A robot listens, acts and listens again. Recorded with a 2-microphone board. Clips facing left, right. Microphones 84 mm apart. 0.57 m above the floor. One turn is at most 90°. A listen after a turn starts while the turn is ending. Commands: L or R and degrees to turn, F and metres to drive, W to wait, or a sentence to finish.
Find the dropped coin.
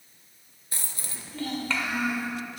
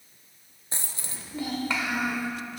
R25
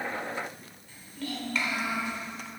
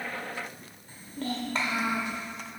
W
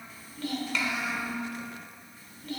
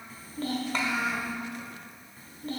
I heard a dropped coin, but can't make it out now. It was about straight ahead or 130° right.